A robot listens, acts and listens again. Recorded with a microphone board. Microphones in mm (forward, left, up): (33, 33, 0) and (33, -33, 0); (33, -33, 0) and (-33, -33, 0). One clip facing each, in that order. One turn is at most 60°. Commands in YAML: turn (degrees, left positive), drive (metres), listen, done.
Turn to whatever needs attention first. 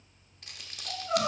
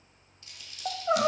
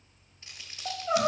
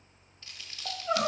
turn: -60
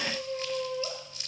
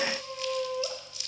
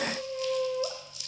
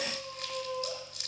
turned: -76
turn: -10
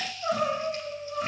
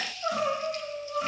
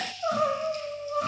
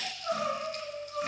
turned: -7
done: "Facing the crying."